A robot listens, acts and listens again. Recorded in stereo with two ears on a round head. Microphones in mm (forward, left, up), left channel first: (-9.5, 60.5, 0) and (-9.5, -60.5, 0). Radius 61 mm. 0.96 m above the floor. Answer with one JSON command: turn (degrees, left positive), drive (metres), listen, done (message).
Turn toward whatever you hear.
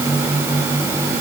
{"listen": true}
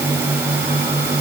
{"listen": true}
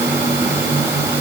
{"done": "I can't make out anything to turn to."}